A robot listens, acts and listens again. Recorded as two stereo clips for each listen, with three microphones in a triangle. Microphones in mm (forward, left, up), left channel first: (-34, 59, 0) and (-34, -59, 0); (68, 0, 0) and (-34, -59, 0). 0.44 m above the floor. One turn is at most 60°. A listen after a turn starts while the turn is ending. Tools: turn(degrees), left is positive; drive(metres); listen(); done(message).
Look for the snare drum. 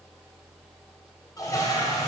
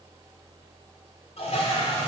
listen()
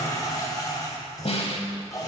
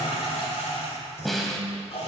turn(degrees=60)
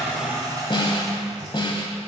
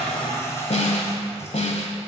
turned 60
turn(degrees=45)
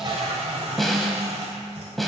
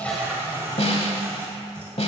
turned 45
done("Found it: a snare drum, straight ahead, 1 to 2 m away.")